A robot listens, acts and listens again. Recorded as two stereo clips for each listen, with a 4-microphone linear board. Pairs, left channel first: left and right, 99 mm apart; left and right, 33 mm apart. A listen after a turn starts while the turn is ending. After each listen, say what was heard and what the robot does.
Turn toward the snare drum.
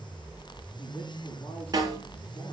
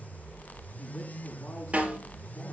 The snare drum: about 40° right or 140° right. Turn 40° right.
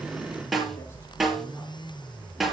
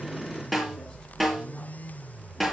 Found it: a snare drum, straight ahead.